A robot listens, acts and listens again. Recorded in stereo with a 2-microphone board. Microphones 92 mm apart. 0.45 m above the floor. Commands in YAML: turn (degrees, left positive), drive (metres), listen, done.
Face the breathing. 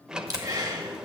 turn: -40
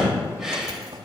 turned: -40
done: "Found it: breathing, straight ahead, 1 to 2 m away."